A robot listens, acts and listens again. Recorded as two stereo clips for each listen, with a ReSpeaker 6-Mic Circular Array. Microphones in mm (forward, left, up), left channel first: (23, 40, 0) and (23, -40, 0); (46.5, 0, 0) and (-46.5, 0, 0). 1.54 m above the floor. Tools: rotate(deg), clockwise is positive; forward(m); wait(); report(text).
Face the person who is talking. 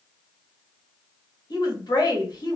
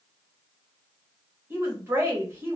rotate(-120)
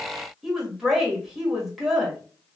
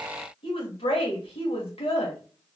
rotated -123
report("Facing the woman speaking.")